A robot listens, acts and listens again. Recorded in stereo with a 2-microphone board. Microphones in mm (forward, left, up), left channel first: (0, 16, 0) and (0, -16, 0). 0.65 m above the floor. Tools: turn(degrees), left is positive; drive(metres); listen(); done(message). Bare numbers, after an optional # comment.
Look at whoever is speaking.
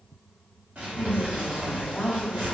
# The woman speaking: about 40° left or 140° left.
turn(40)
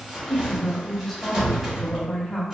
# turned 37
# So it is at 15° left.
turn(15)
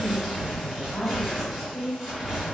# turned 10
done("Facing the woman speaking, under 1 m away.")